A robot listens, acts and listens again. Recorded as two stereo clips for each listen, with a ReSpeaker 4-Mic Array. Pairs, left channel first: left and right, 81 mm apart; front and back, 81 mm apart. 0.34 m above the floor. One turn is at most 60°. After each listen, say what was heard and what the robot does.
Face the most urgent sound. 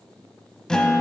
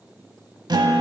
Keep listening.
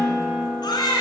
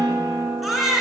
The baby crying: 90° left. Turn 60° left.
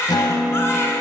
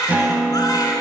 The baby crying is now 35° left. Turn 35° left.
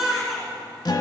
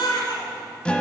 Found it: a baby crying, straight ahead.